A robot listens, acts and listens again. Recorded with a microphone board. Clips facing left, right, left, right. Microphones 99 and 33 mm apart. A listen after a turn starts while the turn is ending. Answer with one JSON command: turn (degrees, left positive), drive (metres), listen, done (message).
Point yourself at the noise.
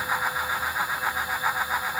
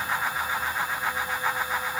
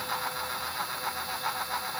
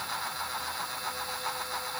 {"listen": true}
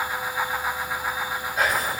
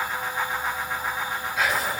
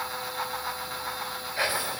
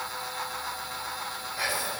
{"turn": 40}
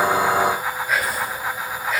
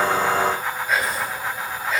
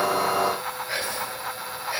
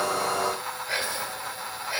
{"done": "Facing the whispering, 1 to 2 m away."}